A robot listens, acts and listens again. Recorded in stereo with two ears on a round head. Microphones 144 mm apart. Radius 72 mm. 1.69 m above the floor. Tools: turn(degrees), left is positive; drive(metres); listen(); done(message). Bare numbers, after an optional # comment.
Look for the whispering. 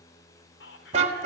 turn(90)
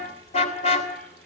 listen()
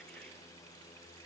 listen()
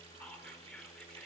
done("Facing the whispering.")